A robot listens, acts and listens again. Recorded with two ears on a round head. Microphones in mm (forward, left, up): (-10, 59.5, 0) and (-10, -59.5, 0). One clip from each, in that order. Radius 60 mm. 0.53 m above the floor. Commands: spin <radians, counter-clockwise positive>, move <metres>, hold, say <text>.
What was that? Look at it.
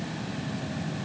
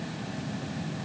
hold
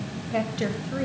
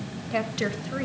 spin -0.52
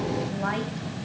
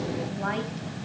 hold
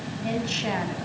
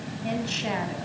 say Found it: a woman speaking, straight ahead, 2 to 4 m away.